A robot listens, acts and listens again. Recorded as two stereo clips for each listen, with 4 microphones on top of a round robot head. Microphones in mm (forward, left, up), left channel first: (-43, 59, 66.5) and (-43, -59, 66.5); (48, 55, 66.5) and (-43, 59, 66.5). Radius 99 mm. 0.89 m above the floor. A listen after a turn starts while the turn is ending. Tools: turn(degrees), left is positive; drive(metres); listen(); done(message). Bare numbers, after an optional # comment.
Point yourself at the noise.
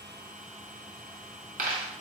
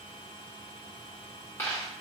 # The dropped coin: 75° right.
turn(-75)
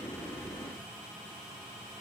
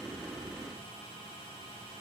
done("I heard a dropped coin from this way, but can't make it out now.")